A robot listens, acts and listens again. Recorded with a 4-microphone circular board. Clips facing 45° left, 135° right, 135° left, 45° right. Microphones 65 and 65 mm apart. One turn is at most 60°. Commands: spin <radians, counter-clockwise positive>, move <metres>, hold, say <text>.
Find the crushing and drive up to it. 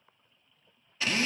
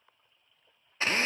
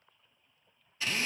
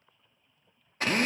hold
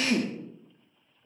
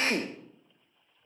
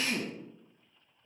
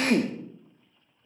hold
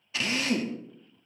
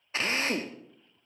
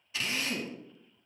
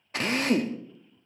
say I can't make out crushing, only a drill.